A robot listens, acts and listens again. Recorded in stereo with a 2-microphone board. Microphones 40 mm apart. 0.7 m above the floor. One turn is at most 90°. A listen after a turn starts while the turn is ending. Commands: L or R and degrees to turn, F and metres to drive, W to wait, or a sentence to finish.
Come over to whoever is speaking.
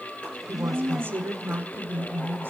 R70
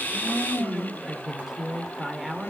R10
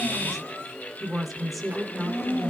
F1.0
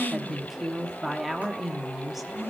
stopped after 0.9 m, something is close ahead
I am next to the woman speaking.